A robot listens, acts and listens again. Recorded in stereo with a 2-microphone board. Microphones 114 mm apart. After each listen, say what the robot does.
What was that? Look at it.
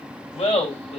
Turn 55° left.
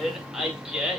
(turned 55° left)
Turn 10° right.
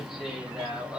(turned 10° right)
Turn 10° right.
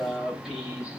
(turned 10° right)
Facing the laughter.